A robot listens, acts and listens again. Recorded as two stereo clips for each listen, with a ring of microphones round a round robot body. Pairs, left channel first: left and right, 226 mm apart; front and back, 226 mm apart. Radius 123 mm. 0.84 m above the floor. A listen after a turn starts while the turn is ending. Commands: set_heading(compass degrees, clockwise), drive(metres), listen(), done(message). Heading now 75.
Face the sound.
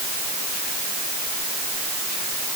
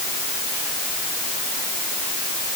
listen()
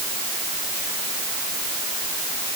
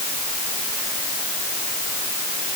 listen()
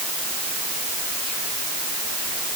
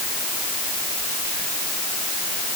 done("I can't make out anything to turn to.")